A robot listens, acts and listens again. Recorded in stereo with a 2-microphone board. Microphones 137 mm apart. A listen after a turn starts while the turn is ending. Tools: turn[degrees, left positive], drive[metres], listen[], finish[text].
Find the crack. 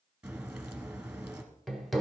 Action: turn[-30]
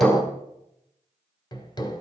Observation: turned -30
Action: listen[]
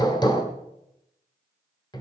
Action: finish[I heard a crack, but can't make it out now. It was about 20° left or 140° right.]